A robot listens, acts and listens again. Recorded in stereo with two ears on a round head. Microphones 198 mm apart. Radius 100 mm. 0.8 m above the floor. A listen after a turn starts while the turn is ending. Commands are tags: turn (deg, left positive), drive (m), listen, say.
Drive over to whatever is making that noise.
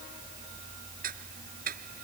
<turn deg="-40"/>
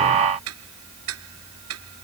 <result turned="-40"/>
<turn deg="-100"/>
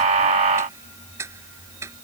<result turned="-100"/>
<turn deg="-15"/>
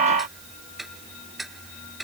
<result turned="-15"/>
<drive m="1.0"/>
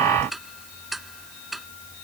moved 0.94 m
<drive m="1.0"/>
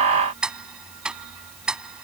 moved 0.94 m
<drive m="1.0"/>
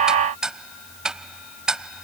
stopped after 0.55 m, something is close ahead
<say>I am next to the ticking.</say>